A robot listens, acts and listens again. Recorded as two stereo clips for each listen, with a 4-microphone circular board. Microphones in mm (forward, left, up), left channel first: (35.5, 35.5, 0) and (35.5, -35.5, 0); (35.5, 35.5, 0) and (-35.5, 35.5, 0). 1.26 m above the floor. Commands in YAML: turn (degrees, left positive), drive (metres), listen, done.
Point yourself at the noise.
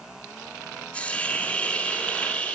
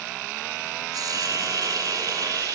turn: 165
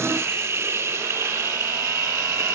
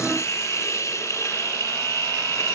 turn: -40
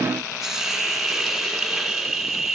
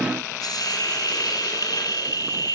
done: "Found it: a hiss, straight ahead, 2 to 4 m away."